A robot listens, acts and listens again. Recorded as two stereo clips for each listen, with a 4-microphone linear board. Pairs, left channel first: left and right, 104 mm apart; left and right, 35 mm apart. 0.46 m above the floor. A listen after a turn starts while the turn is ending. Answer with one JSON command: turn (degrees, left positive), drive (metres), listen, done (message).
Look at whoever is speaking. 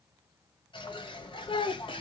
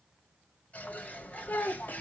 {"turn": 55}
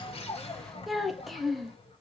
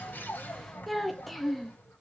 {"done": "Found it: a child speaking, straight ahead, under 1 m away."}